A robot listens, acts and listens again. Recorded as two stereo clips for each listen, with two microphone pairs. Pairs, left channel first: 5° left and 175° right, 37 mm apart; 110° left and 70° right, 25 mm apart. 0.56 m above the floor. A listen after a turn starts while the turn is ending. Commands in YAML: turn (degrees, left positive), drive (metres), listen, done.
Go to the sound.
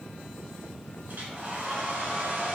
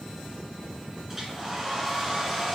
turn: -140
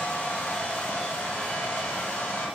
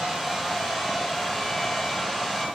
turn: 30
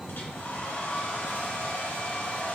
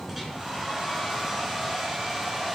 turn: 15
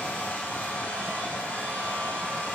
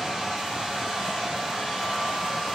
drive: 1.0
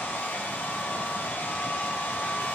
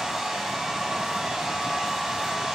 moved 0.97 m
drive: 1.0
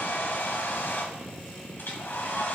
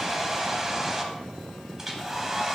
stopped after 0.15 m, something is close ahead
turn: 10
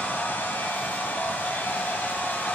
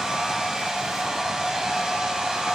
done: "I am next to the hair dryer."